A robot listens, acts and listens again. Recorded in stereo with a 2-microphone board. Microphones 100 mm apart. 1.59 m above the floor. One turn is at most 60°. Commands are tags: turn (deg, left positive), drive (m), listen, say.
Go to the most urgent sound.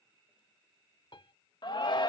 <turn deg="55"/>
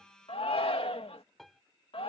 <turn deg="60"/>
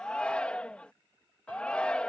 <turn deg="10"/>
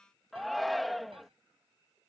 <drive m="1.0"/>
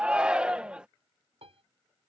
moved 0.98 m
<turn deg="-10"/>
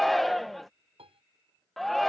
<drive m="1.0"/>
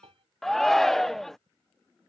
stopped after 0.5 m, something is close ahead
<say>I am next to the shout.</say>